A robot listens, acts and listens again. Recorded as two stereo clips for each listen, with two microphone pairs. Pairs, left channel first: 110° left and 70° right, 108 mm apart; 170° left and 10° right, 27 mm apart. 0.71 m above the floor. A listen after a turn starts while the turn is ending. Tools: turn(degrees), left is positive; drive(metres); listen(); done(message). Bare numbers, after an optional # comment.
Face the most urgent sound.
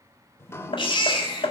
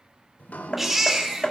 # The baby crying: 70° left.
turn(70)
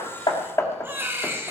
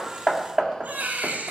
done("Facing the baby crying, 1 to 2 m away.")